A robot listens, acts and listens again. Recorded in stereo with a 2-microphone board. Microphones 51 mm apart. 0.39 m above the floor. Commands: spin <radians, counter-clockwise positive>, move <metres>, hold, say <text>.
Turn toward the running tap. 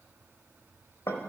hold
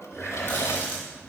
spin 0.79
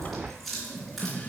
say Facing the running tap.